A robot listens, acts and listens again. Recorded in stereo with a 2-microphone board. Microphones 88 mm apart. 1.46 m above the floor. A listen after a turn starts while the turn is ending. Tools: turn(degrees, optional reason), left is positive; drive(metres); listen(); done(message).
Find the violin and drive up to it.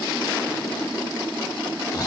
listen()
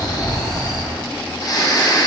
listen()
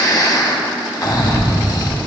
done("I can't make out a violin to turn to.")